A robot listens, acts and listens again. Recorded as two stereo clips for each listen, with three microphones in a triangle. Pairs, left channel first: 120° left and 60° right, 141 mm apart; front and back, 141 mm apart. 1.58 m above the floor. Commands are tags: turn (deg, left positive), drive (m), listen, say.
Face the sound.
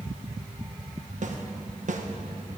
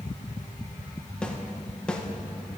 <turn deg="-85"/>
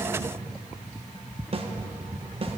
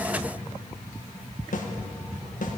<turn deg="-15"/>
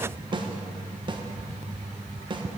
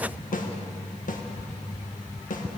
<say>Found it: a snare drum, straight ahead, 1 to 2 m away.</say>